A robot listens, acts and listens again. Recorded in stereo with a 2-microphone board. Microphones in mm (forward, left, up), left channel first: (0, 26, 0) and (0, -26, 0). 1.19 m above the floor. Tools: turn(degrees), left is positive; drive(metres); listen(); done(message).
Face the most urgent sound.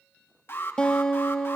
turn(degrees=50)
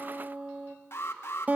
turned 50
turn(degrees=65)
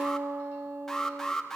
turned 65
done("Facing the alarm.")